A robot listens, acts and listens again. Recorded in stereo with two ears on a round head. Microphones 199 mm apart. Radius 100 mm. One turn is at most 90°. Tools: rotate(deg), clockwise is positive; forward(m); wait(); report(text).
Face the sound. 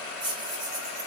rotate(30)
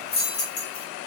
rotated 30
rotate(-35)
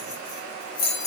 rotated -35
rotate(-30)
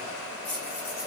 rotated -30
rotate(-10)
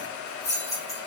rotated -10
rotate(-15)
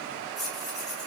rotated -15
report("Facing the keys jangling, 2 to 4 m away.")